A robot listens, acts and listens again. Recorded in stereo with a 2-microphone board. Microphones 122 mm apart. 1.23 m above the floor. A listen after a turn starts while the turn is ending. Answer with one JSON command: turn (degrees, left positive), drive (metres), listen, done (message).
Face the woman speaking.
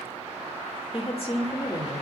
{"turn": 60}
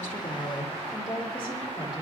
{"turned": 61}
{"turn": 45}
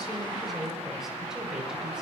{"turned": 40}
{"done": "Found it: a woman speaking, straight ahead."}